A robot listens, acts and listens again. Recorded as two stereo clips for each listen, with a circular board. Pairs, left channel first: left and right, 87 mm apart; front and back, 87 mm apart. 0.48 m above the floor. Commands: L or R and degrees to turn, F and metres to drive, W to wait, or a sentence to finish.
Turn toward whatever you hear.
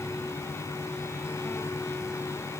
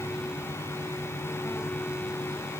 W
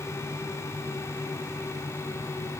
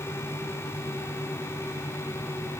W
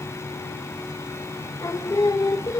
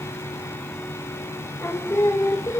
L50
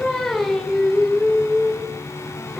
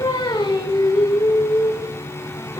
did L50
Found it: singing, straight ahead.